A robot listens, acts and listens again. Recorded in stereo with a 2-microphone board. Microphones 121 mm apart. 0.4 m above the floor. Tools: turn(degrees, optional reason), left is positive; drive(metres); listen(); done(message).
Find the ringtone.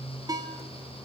turn(degrees=-30, reason="The ringtone: about 30° right or 150° right.")
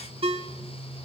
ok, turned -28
turn(degrees=-120, reason="So it is at 120° right.")
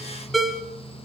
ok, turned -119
done("Facing the ringtone, 2 to 4 m away.")